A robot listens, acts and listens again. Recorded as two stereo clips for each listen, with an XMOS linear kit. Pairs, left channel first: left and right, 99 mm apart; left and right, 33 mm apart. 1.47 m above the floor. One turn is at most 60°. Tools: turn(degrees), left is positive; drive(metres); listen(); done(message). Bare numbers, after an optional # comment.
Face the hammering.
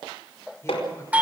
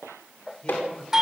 turn(60)
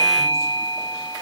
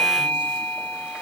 # Nothing new. It was at 30° left.
turn(30)
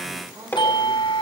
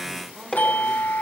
# The hammering is now 20° left.
turn(20)
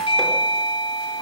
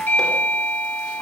listen()
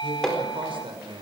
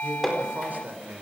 done("Found it: hammering, straight ahead, over 4 m away.")